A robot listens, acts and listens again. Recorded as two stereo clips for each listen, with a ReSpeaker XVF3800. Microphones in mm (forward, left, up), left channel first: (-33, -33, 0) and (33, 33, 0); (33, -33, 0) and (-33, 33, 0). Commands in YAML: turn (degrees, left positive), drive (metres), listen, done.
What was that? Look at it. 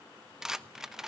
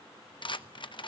turn: -40
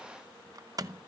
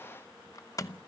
done: "Facing the rattle."